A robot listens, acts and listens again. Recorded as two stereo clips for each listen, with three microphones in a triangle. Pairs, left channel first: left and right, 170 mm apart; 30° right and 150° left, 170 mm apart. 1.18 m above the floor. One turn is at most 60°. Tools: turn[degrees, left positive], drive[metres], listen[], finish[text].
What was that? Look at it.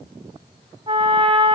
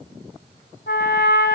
Thought: The trumpet: 35° right.
Action: turn[-35]
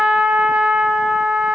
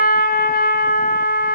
Action: finish[Found it: a trumpet, straight ahead, 2 to 4 m away.]